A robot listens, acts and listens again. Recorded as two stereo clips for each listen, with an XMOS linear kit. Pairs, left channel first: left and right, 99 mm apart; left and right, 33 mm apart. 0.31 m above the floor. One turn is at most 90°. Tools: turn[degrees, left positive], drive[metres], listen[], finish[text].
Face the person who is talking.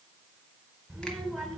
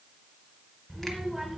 Action: turn[30]
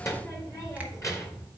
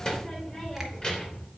Thought: So it is at 150° left.
Action: turn[90]
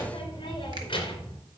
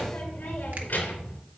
Thought: The child speaking is now 55° left.
Action: turn[55]
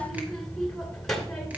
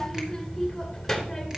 Action: finish[Facing the child speaking.]